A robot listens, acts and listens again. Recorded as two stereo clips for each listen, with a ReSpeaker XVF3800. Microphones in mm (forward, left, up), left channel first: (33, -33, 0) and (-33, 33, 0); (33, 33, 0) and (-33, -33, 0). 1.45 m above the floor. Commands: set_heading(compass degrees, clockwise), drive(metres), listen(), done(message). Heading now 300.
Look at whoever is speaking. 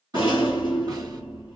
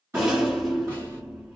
listen()
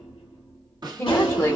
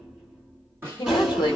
set_heading(285)
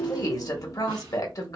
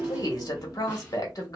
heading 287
done("Facing the woman speaking, 1 to 2 m away.")